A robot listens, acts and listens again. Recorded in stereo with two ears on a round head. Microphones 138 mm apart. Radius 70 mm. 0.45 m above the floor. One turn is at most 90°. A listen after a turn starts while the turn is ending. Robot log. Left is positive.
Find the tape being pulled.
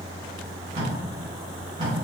note: The tape being pulled: about 40° right or 140° right.
cmd yaw -40
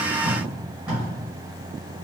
end: Facing the tape being pulled.